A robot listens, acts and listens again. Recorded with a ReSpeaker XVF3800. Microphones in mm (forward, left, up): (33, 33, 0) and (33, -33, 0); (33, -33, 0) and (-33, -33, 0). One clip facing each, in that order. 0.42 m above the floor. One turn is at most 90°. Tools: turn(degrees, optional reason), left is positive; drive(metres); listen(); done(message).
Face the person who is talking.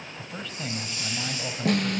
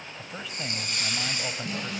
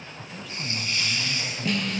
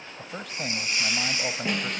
turn(degrees=-90, reason="The man speaking: 170° right.")
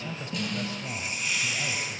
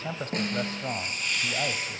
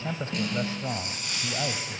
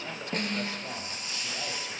turn(degrees=-55, reason="The man speaking is now 55° right.")
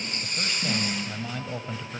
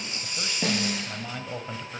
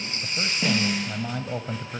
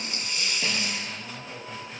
done("Facing the man speaking, 1 to 2 m away.")